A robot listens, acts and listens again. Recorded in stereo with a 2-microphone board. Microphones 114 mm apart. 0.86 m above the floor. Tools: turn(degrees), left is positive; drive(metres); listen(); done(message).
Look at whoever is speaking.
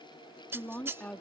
turn(degrees=30)
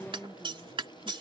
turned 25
turn(degrees=-10)
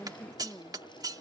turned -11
done("Found it: a woman speaking, straight ahead.")